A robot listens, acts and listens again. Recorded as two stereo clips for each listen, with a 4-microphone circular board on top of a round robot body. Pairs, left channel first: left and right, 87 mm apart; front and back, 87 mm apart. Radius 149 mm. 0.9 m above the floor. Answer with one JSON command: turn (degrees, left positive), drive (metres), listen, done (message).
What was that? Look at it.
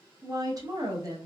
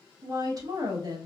{"turn": -135}
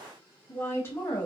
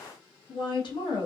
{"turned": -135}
{"turn": 25}
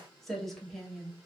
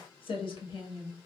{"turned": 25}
{"done": "Facing the woman speaking, 1 to 2 m away."}